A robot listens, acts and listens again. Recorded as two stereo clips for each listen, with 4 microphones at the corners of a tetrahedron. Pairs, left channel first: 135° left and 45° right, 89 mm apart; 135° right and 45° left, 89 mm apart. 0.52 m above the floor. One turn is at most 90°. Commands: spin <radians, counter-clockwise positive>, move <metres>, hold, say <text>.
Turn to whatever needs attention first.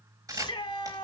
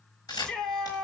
spin 1.57
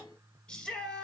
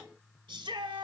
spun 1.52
spin 0.96
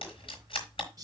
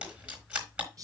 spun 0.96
say Facing the shout, 2 to 4 m away.